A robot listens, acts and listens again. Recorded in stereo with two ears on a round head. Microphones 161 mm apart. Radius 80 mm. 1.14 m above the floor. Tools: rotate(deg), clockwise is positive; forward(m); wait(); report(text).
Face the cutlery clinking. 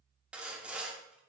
wait()
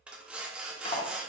rotate(-30)
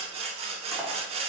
wait()
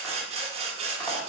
wait()
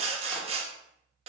report("I heard cutlery clinking, but can't make it out now. It was about straight ahead or 120° left.")